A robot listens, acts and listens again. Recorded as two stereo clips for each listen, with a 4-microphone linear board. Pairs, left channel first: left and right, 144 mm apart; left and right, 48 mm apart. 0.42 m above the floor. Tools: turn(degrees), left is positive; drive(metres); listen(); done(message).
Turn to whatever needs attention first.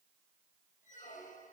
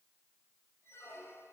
listen()
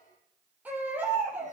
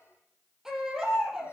turn(degrees=-30)
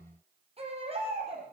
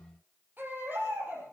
turn(degrees=-135)
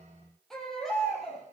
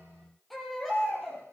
done("Found it: a baby crying, straight ahead.")